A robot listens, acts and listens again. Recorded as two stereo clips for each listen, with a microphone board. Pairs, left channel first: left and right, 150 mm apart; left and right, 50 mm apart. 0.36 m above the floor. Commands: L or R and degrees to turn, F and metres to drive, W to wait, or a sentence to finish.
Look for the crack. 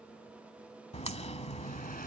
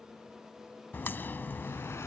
L45
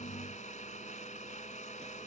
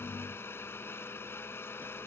W
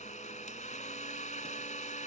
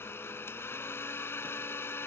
I heard a crack, but can't make it out now. It was about straight ahead or 90° left.